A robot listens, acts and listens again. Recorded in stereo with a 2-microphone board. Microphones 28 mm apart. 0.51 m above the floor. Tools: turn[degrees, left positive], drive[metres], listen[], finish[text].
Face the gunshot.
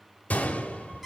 Thought: The gunshot: about 70° left or 110° left.
Action: turn[70]
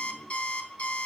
Action: listen[]
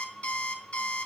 Action: finish[I heard a gunshot, but can't make it out now. It was about straight ahead or 40° left.]